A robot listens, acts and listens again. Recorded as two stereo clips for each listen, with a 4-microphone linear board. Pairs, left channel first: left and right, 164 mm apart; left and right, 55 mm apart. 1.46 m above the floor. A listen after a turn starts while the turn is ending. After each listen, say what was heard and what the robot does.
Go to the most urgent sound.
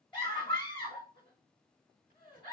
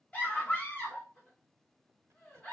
The scream: about 30° left or 150° left. Turn 30° left.
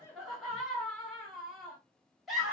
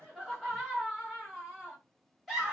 Drive 1.0 m forward.
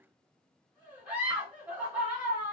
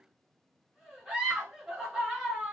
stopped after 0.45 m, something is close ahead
The scream is now 10° right. Turn 10° right.
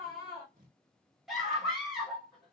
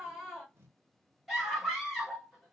Something is in my way. I am facing the scream but have not reached it.